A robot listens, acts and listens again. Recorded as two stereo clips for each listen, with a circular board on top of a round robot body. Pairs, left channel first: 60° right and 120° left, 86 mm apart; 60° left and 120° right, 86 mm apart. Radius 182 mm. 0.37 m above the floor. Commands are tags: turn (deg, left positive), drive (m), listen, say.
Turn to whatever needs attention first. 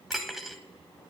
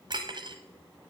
<listen/>
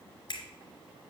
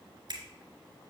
<listen/>
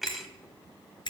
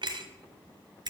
<say>I can't make out anything urgent, only cutlery clinking and a finger snap.</say>